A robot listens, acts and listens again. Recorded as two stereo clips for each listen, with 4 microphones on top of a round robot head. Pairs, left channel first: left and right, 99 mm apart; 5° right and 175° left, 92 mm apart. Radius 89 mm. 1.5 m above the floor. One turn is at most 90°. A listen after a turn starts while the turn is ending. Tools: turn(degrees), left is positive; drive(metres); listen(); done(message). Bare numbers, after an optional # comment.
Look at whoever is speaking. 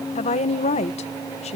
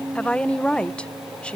# The woman speaking: 75° left.
turn(75)
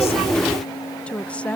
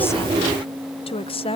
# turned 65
# The woman speaking is now 10° left.
turn(10)
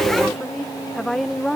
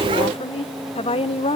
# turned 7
done("Found it: a woman speaking, straight ahead.")